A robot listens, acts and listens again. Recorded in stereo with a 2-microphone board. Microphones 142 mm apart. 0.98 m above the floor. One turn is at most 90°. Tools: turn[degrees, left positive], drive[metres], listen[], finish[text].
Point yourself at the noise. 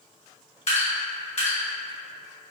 Thought: The dripping: about 50° left or 130° left.
Action: turn[50]
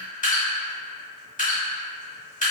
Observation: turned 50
Thought: So it is at 75° left.
Action: turn[75]
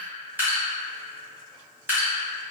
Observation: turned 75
Thought: The dripping is now 15° right.
Action: turn[-15]
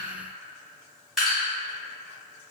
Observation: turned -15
Action: finish[Found it: dripping, straight ahead.]